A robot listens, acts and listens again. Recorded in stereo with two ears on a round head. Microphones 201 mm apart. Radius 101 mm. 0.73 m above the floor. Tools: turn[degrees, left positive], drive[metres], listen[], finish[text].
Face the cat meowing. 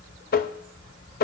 Action: listen[]
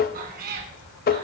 Thought: The cat meowing: about 45° right or 135° right.
Action: turn[-45]
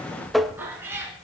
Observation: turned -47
Thought: So it is at 10° right.
Action: turn[-10]
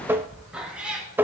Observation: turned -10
Action: finish[Facing the cat meowing, 2 to 4 m away.]